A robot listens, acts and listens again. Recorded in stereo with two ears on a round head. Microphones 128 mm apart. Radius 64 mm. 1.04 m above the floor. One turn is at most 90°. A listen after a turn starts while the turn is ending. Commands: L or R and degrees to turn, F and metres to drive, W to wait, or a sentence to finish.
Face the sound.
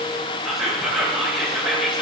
L30
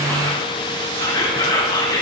L90
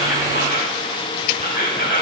L65
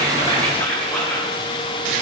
L15
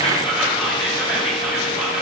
Found it: whispering, straight ahead, over 4 m away.